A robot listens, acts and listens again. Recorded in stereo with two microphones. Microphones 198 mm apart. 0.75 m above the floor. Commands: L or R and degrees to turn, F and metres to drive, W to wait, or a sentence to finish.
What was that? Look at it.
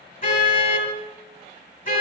L50
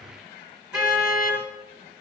Found it: a car horn, straight ahead, over 4 m away.